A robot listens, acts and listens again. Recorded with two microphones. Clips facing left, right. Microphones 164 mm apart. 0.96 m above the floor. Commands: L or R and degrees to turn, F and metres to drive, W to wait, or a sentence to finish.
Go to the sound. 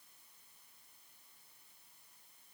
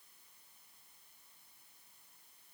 W
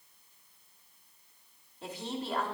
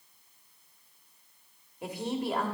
R30
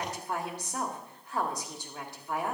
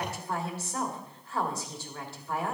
L15
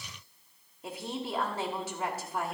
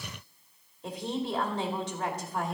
F1.0
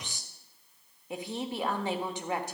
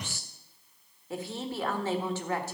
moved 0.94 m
L20
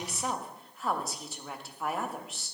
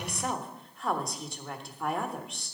F1.0
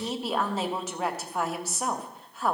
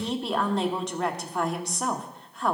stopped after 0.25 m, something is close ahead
Arrived at the woman speaking, straight ahead.